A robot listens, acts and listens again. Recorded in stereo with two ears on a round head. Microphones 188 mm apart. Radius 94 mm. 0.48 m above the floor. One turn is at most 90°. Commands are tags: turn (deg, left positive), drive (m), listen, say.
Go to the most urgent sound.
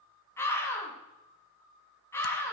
<turn deg="30"/>
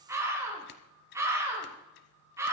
<turn deg="-15"/>
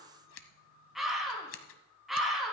<drive m="1.0"/>
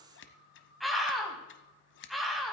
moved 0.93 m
<drive m="1.0"/>
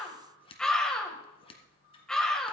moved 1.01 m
<drive m="1.0"/>
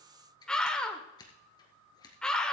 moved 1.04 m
<drive m="1.0"/>
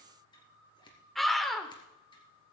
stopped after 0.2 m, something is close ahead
<say>I am next to the scream.</say>